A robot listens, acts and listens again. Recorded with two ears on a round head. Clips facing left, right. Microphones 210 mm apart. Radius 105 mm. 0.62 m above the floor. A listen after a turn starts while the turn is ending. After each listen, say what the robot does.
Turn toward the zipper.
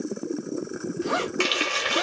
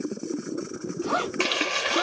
Turn 30° left.
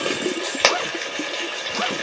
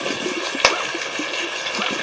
Keep listening.
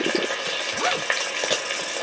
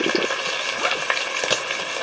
Keep listening.
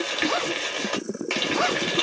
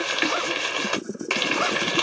I heard a zipper, but can't make it out now. It was about straight ahead or 120° left.